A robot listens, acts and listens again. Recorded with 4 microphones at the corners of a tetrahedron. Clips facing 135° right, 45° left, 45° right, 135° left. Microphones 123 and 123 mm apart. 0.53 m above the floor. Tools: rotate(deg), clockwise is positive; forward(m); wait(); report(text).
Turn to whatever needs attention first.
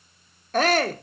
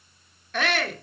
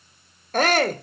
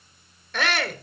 rotate(85)
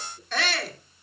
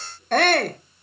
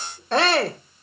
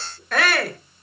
rotate(-15)
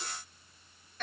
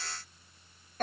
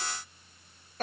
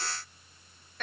report("Found it: a shout, straight ahead, 1 to 2 m away.")